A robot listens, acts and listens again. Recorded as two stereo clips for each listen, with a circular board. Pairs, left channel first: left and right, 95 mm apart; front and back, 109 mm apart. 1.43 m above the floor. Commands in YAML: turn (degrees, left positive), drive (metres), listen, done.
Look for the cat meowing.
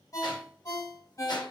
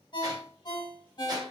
listen: true
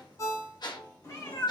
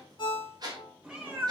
turn: 110
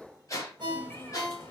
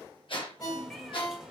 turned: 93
turn: 110
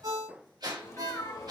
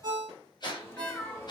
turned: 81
turn: 60
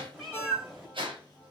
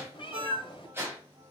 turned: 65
done: "Facing the cat meowing, 1 to 2 m away."